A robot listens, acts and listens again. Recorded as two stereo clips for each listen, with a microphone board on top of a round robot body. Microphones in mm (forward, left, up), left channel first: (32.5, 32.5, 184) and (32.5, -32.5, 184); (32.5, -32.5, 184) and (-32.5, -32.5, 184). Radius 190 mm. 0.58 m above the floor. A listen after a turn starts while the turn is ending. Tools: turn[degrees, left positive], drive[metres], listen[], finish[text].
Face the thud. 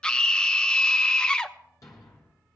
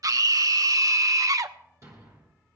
Thought: The thud: 135° left.
Action: turn[135]
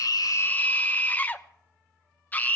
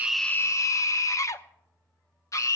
Action: finish[I heard a thud from this way, but can't make it out now.]